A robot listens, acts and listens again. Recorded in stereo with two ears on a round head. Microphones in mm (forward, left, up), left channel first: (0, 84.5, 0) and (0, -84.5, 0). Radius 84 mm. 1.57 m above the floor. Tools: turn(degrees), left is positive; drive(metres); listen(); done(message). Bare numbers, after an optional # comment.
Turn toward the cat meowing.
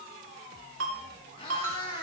# The cat meowing: about 30° left or 150° left.
turn(30)
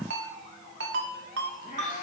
# The cat meowing: about 40° left or 140° left.
turn(40)
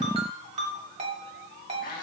# So it is at 130° left.
turn(130)
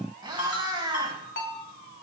# The cat meowing is now 25° right.
turn(-25)
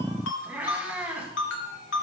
# The cat meowing is now 10° right.
turn(-10)
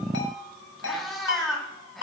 done("Facing the cat meowing, 2 to 4 m away.")